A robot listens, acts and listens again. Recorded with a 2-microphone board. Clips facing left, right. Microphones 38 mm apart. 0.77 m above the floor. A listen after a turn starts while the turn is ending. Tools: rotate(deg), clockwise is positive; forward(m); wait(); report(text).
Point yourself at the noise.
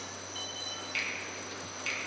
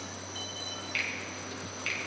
rotate(15)
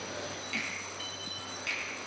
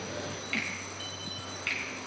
rotate(150)
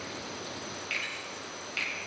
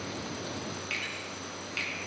report("Found it: a finger snap, straight ahead.")